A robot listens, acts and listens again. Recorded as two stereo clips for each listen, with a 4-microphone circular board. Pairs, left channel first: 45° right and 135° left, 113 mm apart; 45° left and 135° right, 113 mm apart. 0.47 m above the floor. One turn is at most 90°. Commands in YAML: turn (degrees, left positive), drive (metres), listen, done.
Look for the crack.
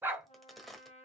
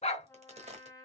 turn: -90
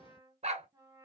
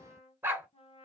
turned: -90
turn: -45
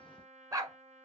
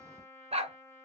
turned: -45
done: "I heard a crack from this way, but can't make it out now."